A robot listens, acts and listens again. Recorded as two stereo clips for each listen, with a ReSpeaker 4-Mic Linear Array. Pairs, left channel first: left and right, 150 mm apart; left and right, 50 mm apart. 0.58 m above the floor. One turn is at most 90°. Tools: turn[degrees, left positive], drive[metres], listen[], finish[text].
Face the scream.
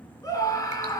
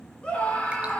Thought: The scream: about 20° left or 160° left.
Action: turn[20]
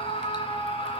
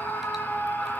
Thought: So it is at 135° left.
Action: turn[90]
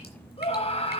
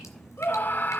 Thought: The scream is now 45° left.
Action: turn[45]
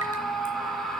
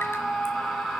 Action: finish[Found it: a scream, straight ahead.]